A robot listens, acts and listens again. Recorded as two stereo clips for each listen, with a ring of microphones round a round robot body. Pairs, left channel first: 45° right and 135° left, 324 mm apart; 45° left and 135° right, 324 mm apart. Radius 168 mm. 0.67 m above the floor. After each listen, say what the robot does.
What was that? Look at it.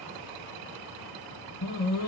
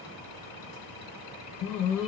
Turn 10° left.
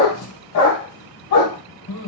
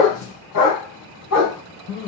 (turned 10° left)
Facing the dog barking, 1 to 2 m away.